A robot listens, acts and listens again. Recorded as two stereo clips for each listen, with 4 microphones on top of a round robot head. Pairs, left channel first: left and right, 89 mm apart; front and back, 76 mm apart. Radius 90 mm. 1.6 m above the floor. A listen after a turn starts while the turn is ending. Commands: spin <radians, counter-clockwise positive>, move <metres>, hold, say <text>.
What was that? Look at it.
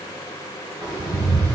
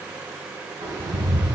spin -2.36
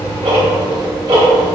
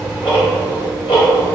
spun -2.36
spin -0.52
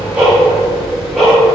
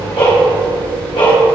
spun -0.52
say Found it: ticking, straight ahead, 2 to 4 m away.